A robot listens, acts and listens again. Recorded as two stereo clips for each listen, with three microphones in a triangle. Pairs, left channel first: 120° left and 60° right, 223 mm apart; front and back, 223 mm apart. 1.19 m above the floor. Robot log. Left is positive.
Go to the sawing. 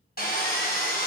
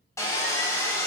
note: The sawing: 75° left.
cmd yaw +75
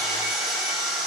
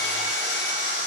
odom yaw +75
note: The sawing is now 30° left.
cmd yaw +30
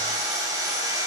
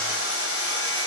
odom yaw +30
note: The sawing is now 15° left.
cmd yaw +15
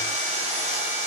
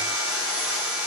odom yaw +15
cmd fwd 1.0
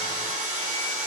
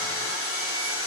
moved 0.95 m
cmd fwd 1.0
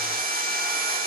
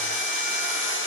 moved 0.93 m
note: The sawing is now 20° right.
cmd yaw -20
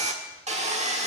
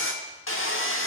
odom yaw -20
cmd fwd 1.0
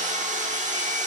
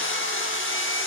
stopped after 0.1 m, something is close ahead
note: The sawing is now 10° right.
cmd yaw -10
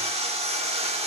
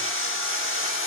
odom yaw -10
end: Arrived at the sawing, straight ahead.